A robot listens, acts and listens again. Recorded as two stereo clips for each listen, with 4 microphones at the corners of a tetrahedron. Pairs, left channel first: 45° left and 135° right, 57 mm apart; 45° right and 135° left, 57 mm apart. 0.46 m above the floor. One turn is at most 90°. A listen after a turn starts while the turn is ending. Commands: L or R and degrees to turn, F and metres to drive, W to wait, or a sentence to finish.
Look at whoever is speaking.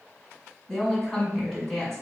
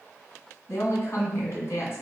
R25
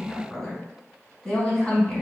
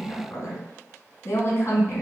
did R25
R15
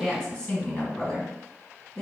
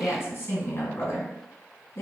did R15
Facing the woman speaking.